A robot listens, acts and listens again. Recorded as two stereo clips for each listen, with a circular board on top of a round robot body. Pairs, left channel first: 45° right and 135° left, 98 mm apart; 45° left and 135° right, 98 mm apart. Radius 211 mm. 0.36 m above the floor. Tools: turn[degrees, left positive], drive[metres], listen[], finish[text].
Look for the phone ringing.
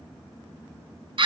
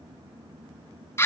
Action: listen[]
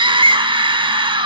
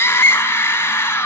Action: listen[]
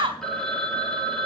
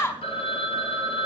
Thought: The phone ringing: 40° left.
Action: turn[40]
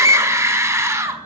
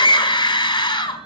Action: listen[]
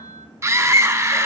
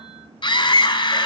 Action: listen[]
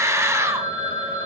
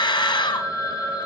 Action: finish[Facing the phone ringing.]